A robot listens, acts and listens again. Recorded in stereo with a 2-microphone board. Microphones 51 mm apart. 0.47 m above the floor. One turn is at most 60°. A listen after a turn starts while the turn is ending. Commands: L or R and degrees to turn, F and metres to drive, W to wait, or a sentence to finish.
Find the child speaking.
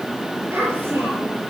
R40
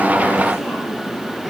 W
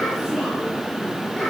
L10
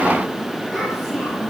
Found it: a child speaking, straight ahead, over 4 m away.